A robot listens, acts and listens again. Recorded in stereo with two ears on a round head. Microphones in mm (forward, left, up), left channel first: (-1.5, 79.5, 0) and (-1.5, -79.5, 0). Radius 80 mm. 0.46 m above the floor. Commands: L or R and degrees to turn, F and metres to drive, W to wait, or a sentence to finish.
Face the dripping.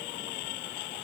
W
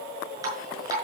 R20
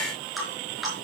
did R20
Facing the dripping.